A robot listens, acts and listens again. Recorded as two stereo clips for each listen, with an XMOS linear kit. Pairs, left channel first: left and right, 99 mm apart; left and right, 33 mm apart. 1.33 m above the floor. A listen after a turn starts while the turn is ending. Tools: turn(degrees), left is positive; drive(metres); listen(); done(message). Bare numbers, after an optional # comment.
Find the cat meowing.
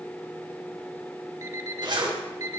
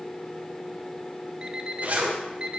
listen()
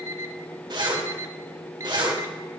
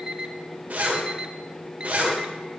listen()
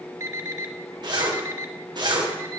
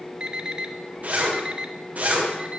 done("I can't make out a cat meowing to turn to.")